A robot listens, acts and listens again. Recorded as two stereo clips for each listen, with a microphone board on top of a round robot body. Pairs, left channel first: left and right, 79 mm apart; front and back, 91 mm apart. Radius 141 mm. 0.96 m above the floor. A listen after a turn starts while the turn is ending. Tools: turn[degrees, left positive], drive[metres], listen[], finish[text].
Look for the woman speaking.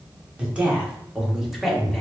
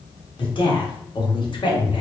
Action: finish[Found it: a woman speaking, straight ahead.]